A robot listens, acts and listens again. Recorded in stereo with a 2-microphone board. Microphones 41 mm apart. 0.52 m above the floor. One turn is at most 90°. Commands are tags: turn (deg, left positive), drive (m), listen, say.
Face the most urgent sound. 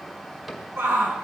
<turn deg="-75"/>
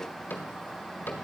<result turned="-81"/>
<listen/>
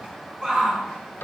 <turn deg="-20"/>
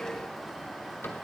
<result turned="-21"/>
<listen/>
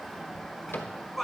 <say>Facing the shout.</say>